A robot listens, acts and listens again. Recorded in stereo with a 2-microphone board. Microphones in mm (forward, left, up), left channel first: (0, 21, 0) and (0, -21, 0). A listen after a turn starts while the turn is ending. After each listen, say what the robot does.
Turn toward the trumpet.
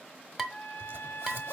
Turn 70° left.
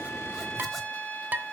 Turn 35° left.
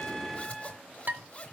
Found it: a trumpet, straight ahead.